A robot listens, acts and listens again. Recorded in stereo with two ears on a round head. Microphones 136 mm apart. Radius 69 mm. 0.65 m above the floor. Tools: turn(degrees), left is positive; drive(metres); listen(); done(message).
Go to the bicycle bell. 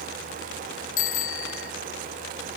turn(degrees=55)
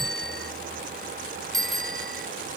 drive(metres=1.0)
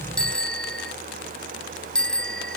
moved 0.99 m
drive(metres=1.0)
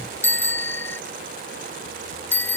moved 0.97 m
turn(degrees=15)
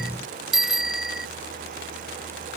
drive(metres=1.0)
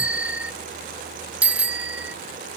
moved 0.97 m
turn(degrees=-10)
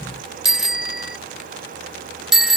drive(metres=1.0)
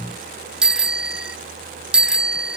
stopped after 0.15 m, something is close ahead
done("I am next to the bicycle bell.")